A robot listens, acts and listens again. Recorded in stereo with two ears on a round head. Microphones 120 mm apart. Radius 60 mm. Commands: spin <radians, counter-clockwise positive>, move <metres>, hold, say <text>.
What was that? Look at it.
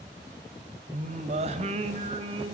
spin -0.61
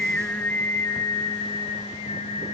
spin 0.79
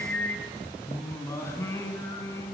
spin 0.35
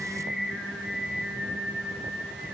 say Facing the singing, 2 to 4 m away.